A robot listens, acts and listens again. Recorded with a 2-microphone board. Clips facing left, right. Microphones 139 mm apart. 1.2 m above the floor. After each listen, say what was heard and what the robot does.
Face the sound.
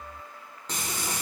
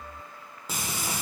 Turn 30° right.
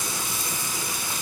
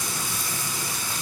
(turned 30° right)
So it is at 25° left. Turn 25° left.
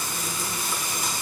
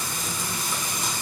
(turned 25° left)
Facing the frying.